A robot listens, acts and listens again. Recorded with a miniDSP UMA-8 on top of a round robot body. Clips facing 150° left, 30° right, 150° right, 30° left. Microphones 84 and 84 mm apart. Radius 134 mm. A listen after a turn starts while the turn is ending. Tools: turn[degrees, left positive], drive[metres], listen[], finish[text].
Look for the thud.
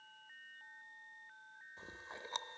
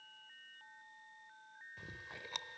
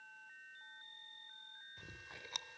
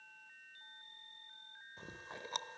Action: listen[]
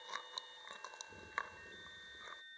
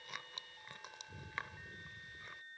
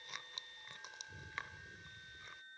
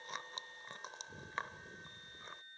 Action: listen[]
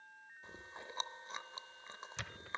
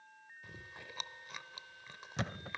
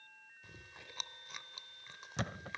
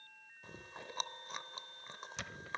Thought: The thud: 95° right.
Action: turn[-95]
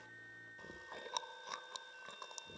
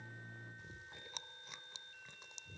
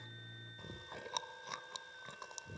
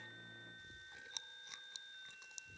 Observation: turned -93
Action: finish[I heard a thud from this way, but can't make it out now.]